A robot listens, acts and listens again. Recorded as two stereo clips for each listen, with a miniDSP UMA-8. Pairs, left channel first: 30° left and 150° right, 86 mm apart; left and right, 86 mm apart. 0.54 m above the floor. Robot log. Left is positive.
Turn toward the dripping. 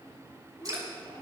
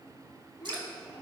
note: The dripping: 105° right.
cmd yaw -105
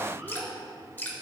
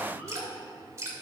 note: The dripping is now 40° right.
cmd yaw -40
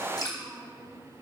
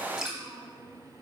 note: The dripping is now 10° right.
cmd yaw -10
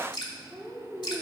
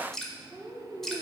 end: Found it: dripping, straight ahead, 1 to 2 m away.